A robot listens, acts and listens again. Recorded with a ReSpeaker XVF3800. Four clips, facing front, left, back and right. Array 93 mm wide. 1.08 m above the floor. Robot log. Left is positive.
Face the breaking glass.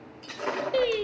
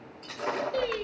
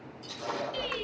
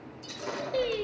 note: The breaking glass: 35° left.
cmd yaw +35
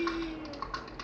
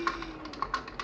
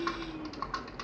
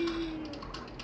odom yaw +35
end: I heard breaking glass from this way, but can't make it out now.